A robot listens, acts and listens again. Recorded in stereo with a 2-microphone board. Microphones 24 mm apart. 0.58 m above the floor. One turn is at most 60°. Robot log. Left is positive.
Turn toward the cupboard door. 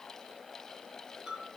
cmd idle
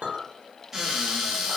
note: The cupboard door: about 15° right or 165° right.
cmd yaw -15
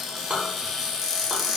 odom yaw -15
end: Found it: a cupboard door, straight ahead.